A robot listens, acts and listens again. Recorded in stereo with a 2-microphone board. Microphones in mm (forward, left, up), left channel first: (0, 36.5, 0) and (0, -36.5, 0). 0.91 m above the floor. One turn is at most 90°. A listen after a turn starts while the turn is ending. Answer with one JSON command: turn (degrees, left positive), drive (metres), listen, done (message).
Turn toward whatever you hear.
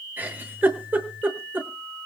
{"turn": -25}
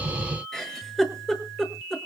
{"done": "Facing the giggle, over 4 m away."}